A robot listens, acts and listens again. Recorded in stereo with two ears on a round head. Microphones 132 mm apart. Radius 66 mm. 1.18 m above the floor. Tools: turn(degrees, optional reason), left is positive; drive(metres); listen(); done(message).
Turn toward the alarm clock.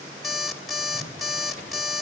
turn(degrees=30)
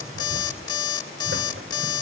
turn(degrees=150, reason="So it is at 150° left.")
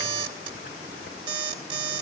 turn(degrees=-35, reason="The alarm clock is now 35° right.")
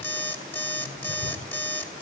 turn(degrees=15, reason="The alarm clock is now 15° left.")
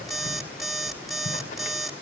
done("Found it: an alarm clock, straight ahead.")